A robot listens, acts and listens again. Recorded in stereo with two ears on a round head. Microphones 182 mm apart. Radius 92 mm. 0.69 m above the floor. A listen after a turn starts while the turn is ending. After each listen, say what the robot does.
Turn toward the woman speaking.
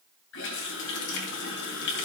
Keep listening.
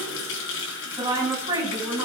Turn 20° right.
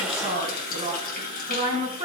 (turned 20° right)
Turn 30° right.
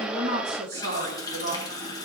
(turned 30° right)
Turn 125° right.
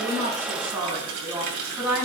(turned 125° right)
Facing the woman speaking.